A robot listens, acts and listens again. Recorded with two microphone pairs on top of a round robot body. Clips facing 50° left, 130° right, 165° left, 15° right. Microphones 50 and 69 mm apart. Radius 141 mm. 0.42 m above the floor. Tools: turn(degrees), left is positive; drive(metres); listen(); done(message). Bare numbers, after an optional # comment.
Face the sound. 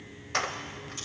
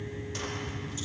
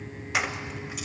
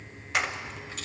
# The keys jangling: 80° left.
turn(80)
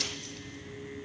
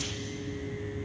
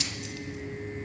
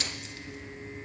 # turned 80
listen()
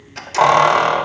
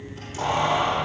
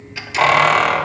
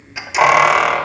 # The keys jangling is now 75° left.
turn(75)
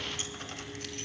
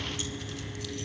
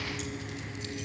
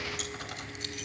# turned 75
listen()
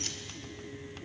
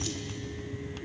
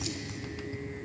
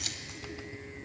listen()
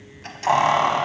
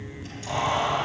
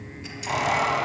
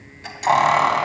# The keys jangling is now 20° left.
turn(20)
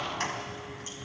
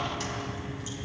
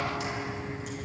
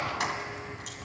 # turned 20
done("Facing the keys jangling, 2 to 4 m away.")